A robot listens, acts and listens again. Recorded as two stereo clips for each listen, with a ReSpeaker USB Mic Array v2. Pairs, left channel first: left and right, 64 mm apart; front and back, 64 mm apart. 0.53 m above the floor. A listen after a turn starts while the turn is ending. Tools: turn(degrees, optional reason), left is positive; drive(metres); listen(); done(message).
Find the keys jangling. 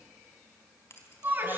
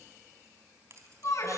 turn(degrees=140, reason="The keys jangling: 140° left.")
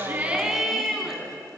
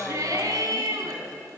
listen()
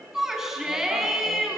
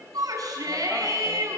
listen()
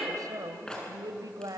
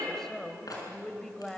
turn(degrees=10, reason="The keys jangling is now 10° left.")
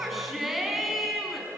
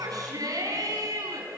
listen()
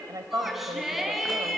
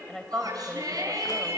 listen()
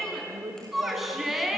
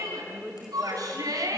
done("Facing where the keys jangling came from. I can't hear it now.")